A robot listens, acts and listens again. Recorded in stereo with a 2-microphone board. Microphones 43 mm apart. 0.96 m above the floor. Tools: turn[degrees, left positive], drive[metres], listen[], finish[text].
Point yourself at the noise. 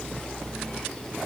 Action: listen[]
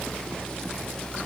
Action: listen[]
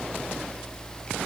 Action: finish[I can't make out anything.]